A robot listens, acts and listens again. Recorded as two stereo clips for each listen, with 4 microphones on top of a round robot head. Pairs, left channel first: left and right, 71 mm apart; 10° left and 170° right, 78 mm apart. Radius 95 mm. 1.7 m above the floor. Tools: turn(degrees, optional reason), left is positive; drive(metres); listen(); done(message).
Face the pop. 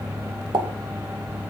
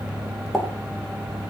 turn(degrees=-80, reason="The pop: 80° right.")
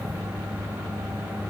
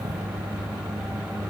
done("Facing where the pop came from. I can't hear it now.")